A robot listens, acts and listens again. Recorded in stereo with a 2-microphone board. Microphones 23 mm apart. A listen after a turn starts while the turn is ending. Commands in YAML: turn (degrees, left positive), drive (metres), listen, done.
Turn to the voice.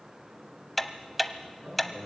turn: -45
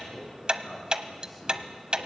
done: "Facing the man speaking, over 4 m away."